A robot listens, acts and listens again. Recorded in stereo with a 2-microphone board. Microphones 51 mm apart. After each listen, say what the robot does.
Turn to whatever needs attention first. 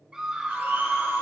Turn 30° right.
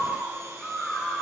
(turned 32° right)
Turn 20° left.
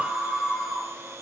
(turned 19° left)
Found it: a scream, straight ahead, 2 to 4 m away.